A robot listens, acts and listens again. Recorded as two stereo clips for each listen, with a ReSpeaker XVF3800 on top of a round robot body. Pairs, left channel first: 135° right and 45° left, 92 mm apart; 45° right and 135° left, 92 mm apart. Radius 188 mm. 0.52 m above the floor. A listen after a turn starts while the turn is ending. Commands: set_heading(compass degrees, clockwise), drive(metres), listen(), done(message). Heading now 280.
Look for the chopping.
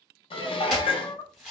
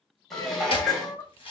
set_heading(320)
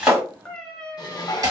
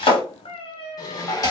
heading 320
done("Found it: chopping, straight ahead, 1 to 2 m away.")